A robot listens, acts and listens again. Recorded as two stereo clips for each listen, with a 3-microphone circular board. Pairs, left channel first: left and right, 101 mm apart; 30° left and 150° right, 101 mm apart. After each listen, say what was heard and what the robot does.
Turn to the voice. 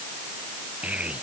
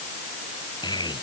The child speaking: 15° right. Turn 15° right.
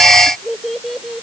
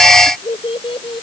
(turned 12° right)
Found it: a child speaking, straight ahead.